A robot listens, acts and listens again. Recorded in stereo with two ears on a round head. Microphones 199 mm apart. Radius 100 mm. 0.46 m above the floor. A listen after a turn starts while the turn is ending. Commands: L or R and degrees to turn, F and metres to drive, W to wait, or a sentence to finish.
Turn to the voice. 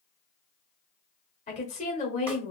L30
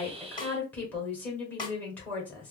L10
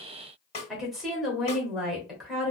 Facing the woman speaking.